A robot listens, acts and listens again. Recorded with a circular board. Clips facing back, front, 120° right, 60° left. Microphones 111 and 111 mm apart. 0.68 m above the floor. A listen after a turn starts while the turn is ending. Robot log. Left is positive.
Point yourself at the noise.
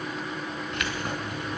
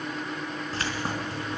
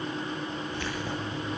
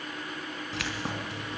note: The keys jangling: 60° left.
cmd yaw +60
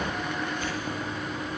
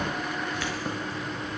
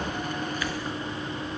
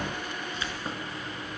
end: Facing the keys jangling.